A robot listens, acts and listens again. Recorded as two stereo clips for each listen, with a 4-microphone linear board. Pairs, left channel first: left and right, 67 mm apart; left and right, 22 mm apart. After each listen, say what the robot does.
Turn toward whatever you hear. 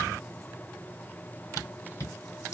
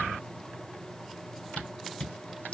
Turn 50° left.
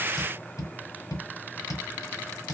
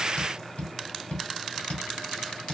Turn 75° left.
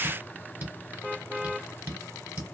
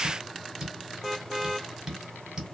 Turn 30° right.
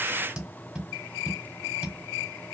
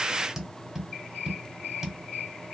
Turn 15° right.
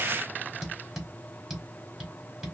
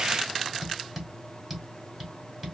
Found it: tapping, straight ahead, 1 to 2 m away.